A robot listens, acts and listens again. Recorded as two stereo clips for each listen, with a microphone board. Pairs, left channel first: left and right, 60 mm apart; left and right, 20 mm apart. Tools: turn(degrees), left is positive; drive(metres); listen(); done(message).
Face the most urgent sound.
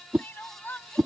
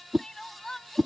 turn(degrees=35)
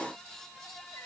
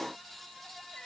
listen()
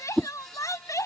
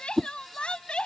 turn(degrees=110)
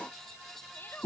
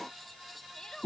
turn(degrees=40)
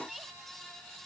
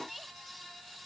done("Found it: crying, straight ahead.")